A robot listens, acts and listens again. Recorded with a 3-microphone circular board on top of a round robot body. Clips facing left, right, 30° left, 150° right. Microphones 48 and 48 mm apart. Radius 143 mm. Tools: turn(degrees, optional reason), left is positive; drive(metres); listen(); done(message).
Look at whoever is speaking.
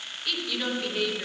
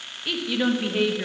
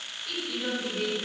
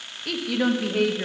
turn(degrees=-160, reason="The woman speaking: 160° right.")
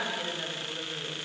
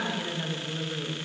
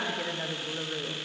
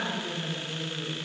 done("Facing the woman speaking, 1 to 2 m away.")